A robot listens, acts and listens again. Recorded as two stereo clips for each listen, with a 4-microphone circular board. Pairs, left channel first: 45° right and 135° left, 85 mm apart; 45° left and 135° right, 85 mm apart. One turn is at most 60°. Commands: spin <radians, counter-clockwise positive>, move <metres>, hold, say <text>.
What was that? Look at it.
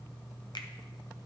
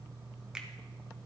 spin -0.96
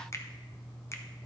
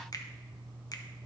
say Found it: a finger snap, straight ahead.